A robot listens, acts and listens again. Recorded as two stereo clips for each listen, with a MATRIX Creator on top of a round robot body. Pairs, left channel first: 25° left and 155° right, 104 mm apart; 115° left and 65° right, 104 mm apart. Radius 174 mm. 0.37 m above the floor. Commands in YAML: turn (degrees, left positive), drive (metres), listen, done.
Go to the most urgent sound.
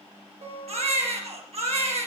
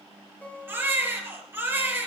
turn: -140
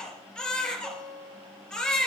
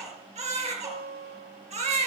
turn: -60
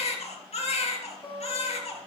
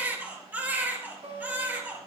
drive: 1.0
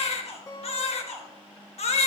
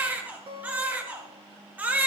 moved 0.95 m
turn: 10
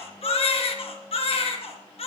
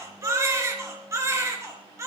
drive: 1.0
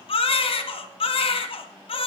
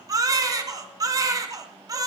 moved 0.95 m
turn: -10
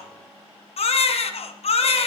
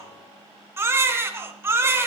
drive: 1.0
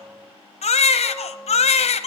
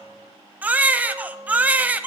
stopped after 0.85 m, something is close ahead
turn: 10
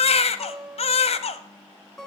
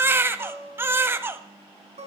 done: "Arrived at the baby crying, straight ahead."